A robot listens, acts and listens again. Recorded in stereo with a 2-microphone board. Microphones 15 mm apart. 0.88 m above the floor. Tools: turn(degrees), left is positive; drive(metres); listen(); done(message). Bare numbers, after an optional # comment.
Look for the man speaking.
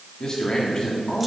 # The man speaking: about 45° left or 135° left.
turn(45)
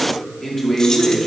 # So it is at 20° left.
turn(20)
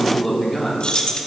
done("Found it: a man speaking, straight ahead, 2 to 4 m away.")